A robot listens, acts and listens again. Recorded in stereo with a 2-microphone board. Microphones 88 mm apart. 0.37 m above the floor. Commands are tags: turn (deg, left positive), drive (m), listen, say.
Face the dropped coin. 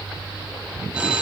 <listen/>
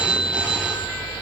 <listen/>
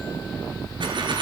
<turn deg="-70"/>
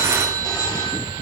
<listen/>
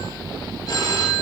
<say>I heard a dropped coin, but can't make it out now. It was about straight ahead or 40° right.</say>